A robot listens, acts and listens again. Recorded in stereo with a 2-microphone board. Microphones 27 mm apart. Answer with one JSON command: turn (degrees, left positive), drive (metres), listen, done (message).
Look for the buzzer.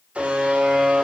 {"turn": -60}
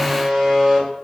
{"done": "Found it: a buzzer, straight ahead, 2 to 4 m away."}